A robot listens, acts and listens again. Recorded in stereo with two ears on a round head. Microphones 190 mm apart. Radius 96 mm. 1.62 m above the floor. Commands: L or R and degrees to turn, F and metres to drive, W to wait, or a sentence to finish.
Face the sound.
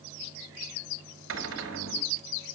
R60
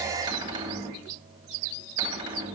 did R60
R20
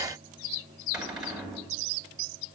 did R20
Facing the cupboard door, 2 to 4 m away.